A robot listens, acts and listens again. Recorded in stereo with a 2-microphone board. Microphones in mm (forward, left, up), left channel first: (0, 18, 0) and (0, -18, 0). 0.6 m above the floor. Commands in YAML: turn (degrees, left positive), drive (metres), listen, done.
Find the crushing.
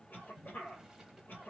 listen: true
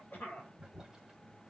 listen: true
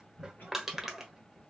turn: -30
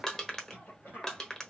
turn: 20
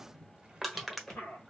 done: "Facing the crushing, under 1 m away."